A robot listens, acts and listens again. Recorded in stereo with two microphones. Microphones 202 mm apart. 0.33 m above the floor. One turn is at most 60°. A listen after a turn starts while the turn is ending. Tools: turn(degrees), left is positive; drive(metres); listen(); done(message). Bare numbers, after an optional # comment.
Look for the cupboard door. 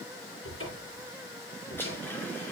turn(60)
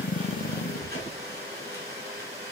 # So it is at 30° left.
turn(30)
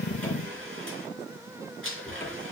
# The cupboard door is now 10° left.
turn(10)
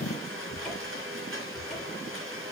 done("Found it: a cupboard door, straight ahead.")